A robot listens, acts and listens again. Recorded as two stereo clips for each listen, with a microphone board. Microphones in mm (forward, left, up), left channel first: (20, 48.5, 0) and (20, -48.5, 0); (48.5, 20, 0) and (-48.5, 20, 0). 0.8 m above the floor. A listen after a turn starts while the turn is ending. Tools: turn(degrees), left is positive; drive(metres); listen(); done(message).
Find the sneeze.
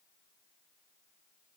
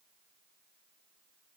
listen()
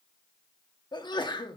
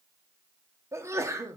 turn(degrees=125)
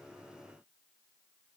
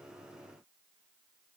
done("I heard a sneeze from this way, but can't make it out now.")